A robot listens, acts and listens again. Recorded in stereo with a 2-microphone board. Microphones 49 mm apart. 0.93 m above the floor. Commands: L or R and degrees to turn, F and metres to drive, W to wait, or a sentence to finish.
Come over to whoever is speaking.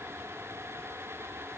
W
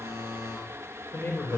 L50
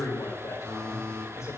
L80
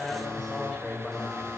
F1.0
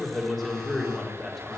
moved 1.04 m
F1.0
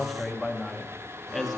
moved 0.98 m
F1.0
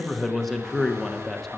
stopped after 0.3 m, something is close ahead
Arrived at the man speaking, straight ahead.